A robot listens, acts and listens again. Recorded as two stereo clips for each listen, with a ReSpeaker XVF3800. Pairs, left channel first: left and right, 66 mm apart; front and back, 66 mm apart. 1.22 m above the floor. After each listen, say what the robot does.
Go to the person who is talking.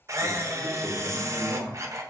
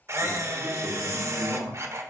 Turn 45° left.
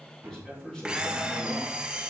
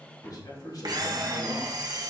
Turn 10° left.
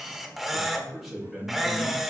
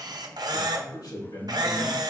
Drive 1.0 m forward.
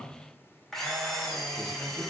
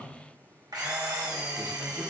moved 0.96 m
Keep listening.
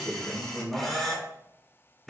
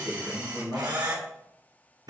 Turn 15° right.
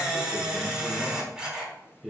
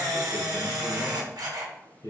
Drive 1.0 m forward.
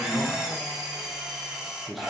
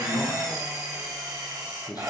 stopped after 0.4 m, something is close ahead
I am next to the man speaking.